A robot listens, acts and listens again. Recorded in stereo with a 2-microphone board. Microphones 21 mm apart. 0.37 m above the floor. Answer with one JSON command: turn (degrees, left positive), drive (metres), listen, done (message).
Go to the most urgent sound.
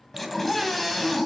{"turn": 30}
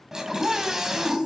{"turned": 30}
{"turn": -20}
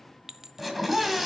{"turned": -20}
{"drive": 1.0}
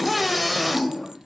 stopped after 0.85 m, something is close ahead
{"done": "Arrived at the scream, straight ahead."}